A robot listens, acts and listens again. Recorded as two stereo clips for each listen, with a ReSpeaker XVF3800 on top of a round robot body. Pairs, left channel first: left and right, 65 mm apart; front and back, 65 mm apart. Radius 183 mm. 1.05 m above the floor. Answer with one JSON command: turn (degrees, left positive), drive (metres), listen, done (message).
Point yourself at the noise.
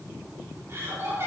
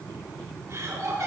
{"turn": -140}
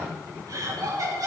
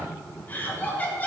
{"turn": -65}
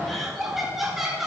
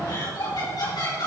{"done": "Facing the laughter, over 4 m away."}